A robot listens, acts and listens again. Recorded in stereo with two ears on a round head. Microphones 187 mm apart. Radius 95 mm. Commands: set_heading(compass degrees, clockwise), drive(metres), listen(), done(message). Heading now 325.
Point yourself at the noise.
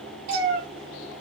set_heading(30)
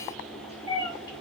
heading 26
set_heading(11)
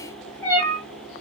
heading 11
set_heading(351)
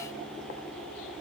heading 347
listen()
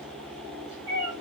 set_heading(327)
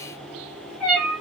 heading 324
done("Found it: a cat meowing, straight ahead.")